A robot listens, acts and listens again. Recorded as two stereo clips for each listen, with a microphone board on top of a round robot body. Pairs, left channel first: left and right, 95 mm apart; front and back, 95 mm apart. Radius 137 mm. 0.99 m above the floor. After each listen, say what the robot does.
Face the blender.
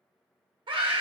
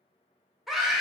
Keep listening.
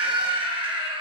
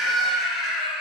Keep listening.
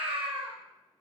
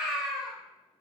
I can't make out a blender to turn to.